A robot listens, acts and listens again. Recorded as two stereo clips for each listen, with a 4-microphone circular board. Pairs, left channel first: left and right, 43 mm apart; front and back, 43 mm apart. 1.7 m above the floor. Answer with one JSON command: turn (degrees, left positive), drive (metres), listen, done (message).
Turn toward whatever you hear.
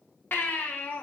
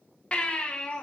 {"turn": 65}
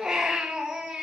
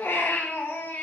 {"turn": -15}
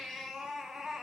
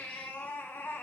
{"done": "Found it: a baby crying, straight ahead."}